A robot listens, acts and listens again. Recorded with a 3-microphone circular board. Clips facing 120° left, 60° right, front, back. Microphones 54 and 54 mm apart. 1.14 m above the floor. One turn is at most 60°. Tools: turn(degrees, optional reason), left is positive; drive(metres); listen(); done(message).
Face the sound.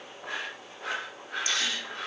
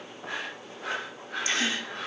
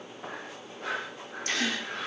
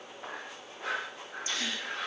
done("Found it: a gasp, straight ahead, 1 to 2 m away.")